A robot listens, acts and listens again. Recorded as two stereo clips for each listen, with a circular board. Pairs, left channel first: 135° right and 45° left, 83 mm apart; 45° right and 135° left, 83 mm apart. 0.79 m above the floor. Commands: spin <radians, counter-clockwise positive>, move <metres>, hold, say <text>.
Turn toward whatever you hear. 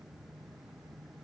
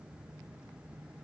hold
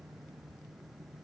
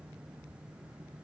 hold
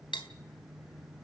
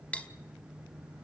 spin -2.09
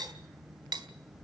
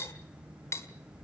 spin 0.17
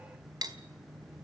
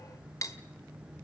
say Facing the cutlery clinking.